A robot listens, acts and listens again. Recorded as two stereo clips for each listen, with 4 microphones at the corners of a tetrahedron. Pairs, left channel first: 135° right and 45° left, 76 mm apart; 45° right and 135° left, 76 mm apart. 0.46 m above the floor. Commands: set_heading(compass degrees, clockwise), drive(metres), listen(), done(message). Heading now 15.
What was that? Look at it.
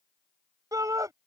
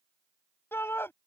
set_heading(5)
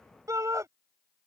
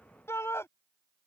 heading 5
done("Facing the shout.")